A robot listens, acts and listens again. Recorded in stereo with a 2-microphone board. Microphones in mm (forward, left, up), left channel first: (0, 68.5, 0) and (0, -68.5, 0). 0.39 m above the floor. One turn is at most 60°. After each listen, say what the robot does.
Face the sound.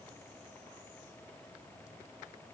Keep listening.
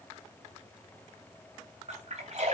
Turn 55° right.
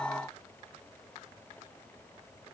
Keep listening.
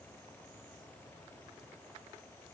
I heard a splash, but can't make it out now. It was about straight ahead or 70° right.